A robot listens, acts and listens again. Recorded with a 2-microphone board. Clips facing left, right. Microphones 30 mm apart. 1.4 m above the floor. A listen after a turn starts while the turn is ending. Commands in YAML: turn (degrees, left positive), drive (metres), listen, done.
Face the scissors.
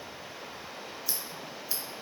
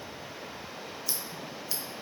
turn: 30
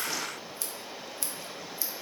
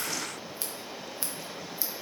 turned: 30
turn: -25
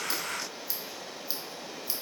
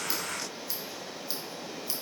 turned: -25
done: "Found it: scissors, straight ahead."